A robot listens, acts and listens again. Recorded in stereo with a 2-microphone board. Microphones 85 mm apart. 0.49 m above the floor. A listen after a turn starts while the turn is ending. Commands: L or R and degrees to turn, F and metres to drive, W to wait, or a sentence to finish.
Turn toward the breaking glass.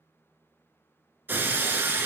R25
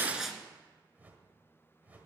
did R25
W
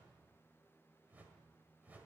I heard breaking glass, but can't make it out now. It was about straight ahead or 130° right.